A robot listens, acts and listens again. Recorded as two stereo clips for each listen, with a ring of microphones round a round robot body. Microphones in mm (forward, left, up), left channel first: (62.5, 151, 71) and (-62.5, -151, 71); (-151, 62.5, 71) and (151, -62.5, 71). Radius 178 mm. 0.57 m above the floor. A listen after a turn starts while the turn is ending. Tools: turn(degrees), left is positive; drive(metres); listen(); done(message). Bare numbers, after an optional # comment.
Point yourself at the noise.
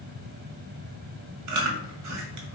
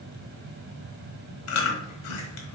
# The chewing: 155° right.
turn(-155)
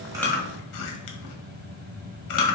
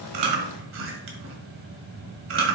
# The chewing is now 30° left.
turn(30)
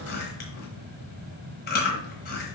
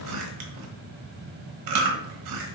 done("Found it: chewing, straight ahead.")